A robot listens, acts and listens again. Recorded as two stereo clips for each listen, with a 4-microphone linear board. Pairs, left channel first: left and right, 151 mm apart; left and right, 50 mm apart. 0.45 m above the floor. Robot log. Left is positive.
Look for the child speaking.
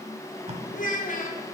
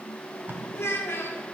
note: The child speaking: about 60° left or 120° left.
cmd yaw +60
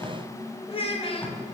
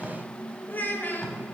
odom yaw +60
note: So it is at 45° left.
cmd yaw +45
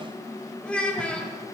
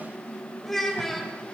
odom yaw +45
note: The child speaking is now 10° left.
cmd yaw +10
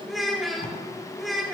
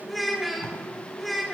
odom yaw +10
end: Facing the child speaking.